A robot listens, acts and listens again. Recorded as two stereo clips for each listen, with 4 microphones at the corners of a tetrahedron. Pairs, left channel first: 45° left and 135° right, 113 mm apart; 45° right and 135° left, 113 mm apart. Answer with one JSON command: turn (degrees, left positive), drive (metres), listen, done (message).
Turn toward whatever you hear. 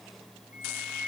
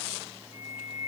{"turn": -60}
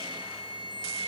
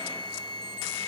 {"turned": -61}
{"done": "Facing the flute."}